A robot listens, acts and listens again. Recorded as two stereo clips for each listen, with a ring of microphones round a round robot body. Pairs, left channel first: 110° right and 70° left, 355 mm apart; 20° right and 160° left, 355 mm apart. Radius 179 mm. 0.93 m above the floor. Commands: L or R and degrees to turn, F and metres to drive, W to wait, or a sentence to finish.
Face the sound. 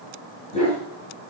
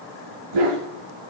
L175
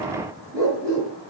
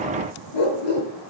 R15
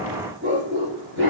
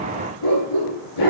Found it: a dog barking, straight ahead, over 4 m away.